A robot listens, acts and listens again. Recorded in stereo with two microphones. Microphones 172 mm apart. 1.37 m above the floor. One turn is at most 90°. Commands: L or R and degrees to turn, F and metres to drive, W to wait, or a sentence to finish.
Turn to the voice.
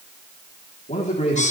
L40
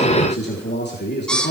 L90
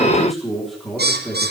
Found it: a man speaking, straight ahead, 2 to 4 m away.